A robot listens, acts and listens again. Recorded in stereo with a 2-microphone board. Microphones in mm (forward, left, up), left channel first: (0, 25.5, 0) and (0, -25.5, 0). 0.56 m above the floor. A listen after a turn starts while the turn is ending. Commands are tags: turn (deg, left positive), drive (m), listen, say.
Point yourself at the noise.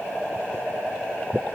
<listen/>
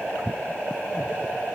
<listen/>
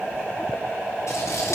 <turn deg="65"/>
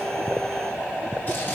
<listen/>
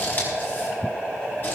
<turn deg="45"/>
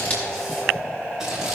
<listen/>
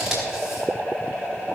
<say>Found it: scissors, straight ahead.</say>